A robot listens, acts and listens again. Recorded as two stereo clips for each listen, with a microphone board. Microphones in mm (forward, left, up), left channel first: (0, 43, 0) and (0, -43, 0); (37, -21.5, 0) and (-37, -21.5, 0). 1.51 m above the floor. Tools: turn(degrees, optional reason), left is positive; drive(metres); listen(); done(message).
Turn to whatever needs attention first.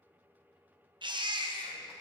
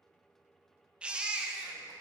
turn(degrees=-105, reason="The baby crying: 105° right.")
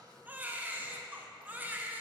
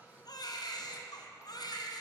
turn(degrees=-20, reason="The baby crying is now 20° right.")
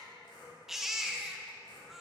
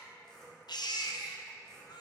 done("Facing the baby crying.")